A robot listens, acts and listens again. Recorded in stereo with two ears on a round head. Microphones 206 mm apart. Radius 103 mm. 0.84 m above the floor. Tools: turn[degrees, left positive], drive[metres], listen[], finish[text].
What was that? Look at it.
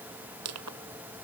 Action: turn[-90]
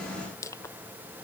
Thought: So it is at 15° left.
Action: turn[15]
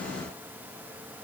Action: listen[]
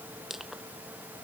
Action: finish[Facing the crushing.]